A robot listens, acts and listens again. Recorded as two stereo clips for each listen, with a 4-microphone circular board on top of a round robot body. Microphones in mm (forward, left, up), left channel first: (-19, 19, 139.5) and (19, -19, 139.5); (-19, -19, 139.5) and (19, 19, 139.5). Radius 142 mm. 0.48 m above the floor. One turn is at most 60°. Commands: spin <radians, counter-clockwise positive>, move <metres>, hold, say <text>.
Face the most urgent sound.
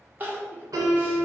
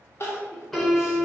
spin -1.05
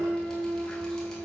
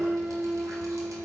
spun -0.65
spin -1.05
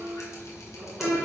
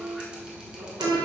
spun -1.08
hold
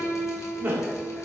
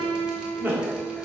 say Found it: crying, straight ahead, 1 to 2 m away.